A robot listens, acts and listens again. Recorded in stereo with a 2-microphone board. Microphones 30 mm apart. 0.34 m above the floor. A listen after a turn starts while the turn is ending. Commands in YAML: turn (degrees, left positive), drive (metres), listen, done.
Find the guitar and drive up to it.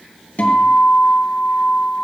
turn: 50
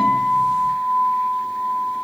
drive: 1.0
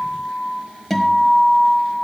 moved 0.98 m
drive: 1.0
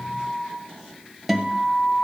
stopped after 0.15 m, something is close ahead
done: "I am next to the guitar."